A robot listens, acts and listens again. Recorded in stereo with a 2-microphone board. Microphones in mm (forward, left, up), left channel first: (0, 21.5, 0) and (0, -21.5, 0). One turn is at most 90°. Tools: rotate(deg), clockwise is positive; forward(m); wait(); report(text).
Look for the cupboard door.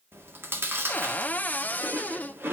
rotate(-35)
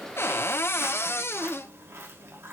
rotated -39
rotate(-90)
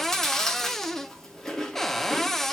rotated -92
rotate(-10)
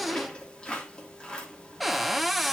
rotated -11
report("Found it: a cupboard door, straight ahead, under 1 m away.")